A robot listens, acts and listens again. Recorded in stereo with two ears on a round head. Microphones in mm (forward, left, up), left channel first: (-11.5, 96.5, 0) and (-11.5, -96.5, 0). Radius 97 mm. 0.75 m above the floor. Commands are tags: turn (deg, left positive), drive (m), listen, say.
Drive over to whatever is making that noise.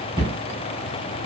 <turn deg="-15"/>
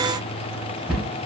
<drive m="1.0"/>
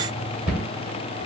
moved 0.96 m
<drive m="1.0"/>
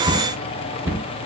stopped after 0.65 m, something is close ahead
<turn deg="-10"/>
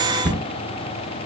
<say>Arrived at the cupboard door, straight ahead.</say>